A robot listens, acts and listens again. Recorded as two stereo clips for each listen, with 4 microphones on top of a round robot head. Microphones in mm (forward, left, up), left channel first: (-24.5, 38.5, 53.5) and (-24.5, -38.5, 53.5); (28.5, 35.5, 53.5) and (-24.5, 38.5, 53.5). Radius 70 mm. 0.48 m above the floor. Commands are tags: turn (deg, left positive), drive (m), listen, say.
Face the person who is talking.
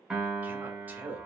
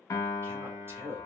<turn deg="-155"/>
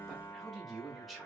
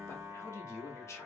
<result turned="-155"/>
<say>Facing the man speaking, 1 to 2 m away.</say>